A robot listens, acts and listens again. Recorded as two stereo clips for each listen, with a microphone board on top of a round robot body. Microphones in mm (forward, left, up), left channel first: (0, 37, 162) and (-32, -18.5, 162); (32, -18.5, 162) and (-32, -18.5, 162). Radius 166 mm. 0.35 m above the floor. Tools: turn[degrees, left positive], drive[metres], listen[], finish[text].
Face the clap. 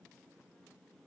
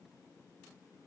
Action: listen[]
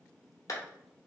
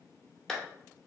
Thought: The clap: 85° left.
Action: turn[85]
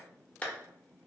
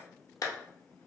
Action: finish[Facing the clap, 1 to 2 m away.]